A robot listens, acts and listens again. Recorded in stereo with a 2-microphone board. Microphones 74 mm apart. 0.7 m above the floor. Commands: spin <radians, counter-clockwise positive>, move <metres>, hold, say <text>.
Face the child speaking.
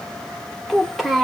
spin 0.52
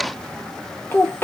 spin 2.53
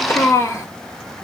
spin 0.70
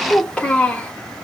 spin 0.26
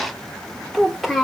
say Facing the child speaking, 1 to 2 m away.